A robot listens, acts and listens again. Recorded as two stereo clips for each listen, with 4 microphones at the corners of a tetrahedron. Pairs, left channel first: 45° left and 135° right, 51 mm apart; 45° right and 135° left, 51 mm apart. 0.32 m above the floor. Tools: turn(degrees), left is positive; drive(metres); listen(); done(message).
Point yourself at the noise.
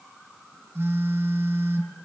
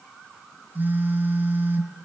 turn(degrees=-175)
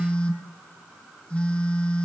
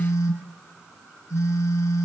turn(degrees=-20)
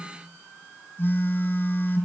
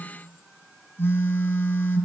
done("Facing the phone buzzing.")